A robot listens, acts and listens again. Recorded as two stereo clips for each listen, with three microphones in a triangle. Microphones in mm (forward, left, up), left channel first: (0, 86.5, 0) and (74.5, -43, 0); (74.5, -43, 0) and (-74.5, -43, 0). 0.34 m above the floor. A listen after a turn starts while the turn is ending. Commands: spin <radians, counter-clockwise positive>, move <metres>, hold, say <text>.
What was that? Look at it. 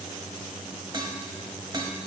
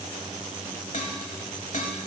spin -0.17
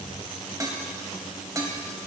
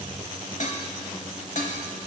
say Facing the dishes clattering.